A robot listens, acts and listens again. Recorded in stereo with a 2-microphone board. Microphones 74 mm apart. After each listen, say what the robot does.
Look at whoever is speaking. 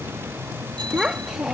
Turn 30° right.
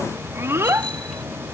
Turn 145° right.
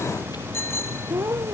Turn 35° right.
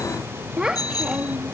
Turn 10° right.
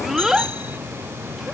Facing the child speaking.